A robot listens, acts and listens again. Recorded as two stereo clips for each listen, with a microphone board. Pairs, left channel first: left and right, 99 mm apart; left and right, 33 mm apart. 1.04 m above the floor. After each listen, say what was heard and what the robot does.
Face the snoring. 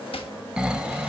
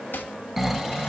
Turn 30° right.
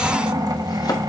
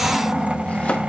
So it is at 140° right. Turn 140° right.
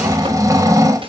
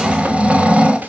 The snoring is now 35° right. Turn 35° right.
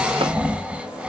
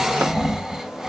The snoring is now 15° right. Turn 15° right.
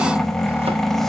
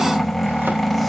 Found it: snoring, straight ahead, under 1 m away.